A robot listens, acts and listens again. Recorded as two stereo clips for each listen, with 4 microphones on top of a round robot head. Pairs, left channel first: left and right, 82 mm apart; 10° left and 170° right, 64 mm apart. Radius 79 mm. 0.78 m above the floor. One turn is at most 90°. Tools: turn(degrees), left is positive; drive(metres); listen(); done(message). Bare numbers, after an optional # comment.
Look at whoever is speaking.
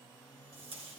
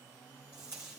listen()
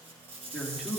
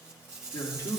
done("Facing the man speaking, 2 to 4 m away.")